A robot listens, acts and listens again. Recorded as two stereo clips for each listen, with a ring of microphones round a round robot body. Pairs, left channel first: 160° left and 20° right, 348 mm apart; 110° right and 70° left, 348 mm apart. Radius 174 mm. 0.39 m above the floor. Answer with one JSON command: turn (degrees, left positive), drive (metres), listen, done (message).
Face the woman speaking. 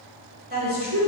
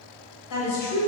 {"turn": -80}
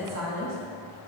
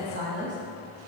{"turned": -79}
{"turn": 15}
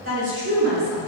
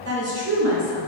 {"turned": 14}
{"turn": 35}
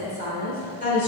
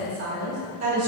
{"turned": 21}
{"turn": 45}
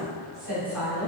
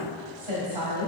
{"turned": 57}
{"done": "Facing the woman speaking."}